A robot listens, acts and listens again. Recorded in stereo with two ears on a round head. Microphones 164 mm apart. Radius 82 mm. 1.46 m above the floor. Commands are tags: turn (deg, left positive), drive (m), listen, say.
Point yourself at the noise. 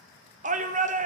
<turn deg="-40"/>
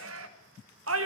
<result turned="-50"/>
<turn deg="-85"/>
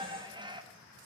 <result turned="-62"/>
<turn deg="-25"/>
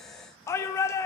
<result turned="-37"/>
<turn deg="15"/>
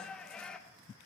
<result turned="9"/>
<say>Found it: a shout, straight ahead.</say>